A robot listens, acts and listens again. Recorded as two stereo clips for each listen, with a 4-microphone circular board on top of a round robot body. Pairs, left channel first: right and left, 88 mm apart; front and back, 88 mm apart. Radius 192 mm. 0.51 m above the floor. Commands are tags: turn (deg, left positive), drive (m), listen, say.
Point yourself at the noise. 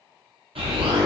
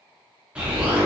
<turn deg="100"/>
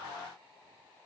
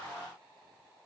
<say>I heard an explosion from this way, but can't make it out now.</say>